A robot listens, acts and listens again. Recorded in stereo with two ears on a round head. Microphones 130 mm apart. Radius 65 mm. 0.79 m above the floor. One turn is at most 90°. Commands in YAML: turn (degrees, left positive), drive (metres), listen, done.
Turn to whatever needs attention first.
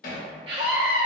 turn: -40
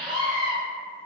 done: "Facing the scream."